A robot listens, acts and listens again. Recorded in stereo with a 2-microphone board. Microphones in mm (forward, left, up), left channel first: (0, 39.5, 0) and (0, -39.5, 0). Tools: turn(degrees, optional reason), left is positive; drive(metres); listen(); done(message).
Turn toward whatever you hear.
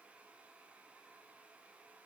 listen()
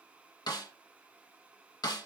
turn(degrees=60, reason="The snare drum: about 60° left or 120° left.")
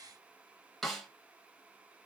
done("Found it: a snare drum, straight ahead.")